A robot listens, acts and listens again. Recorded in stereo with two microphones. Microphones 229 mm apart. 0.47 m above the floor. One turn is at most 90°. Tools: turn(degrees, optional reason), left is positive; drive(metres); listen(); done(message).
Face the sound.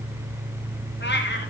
turn(degrees=50, reason="The cat meowing: about 50° left or 130° left.")
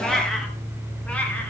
done("Facing the cat meowing, over 4 m away.")